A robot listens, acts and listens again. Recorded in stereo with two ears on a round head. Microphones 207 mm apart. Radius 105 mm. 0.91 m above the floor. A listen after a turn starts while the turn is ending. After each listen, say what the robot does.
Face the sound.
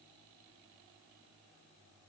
Keep listening.
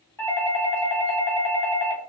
Turn 30° left.
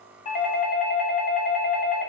Turn 130° left.
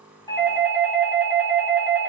Facing the doorbell.